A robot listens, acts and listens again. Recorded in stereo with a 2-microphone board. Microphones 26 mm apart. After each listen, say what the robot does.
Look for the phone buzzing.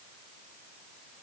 Keep listening.
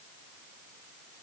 Keep listening.
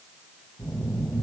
Turn 25° left.
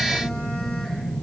Turn 125° left.
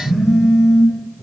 Turn 10° right.
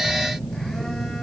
Found it: a phone buzzing, straight ahead.